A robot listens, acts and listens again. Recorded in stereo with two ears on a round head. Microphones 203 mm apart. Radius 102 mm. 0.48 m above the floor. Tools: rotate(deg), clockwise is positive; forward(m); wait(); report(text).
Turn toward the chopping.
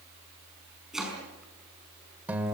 rotate(-30)
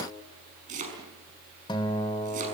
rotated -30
rotate(35)
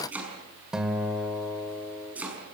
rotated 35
report("Facing the chopping.")